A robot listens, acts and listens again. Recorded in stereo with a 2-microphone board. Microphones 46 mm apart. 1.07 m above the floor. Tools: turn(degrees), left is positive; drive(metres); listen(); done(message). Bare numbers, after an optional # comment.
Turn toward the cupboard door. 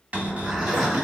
# The cupboard door: about 30° right or 150° right.
turn(-30)
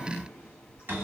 # So it is at 115° right.
turn(-115)
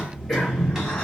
listen()
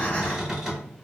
# The cupboard door is now 10° right.
turn(-10)
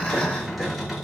done("Found it: a cupboard door, straight ahead, 1 to 2 m away.")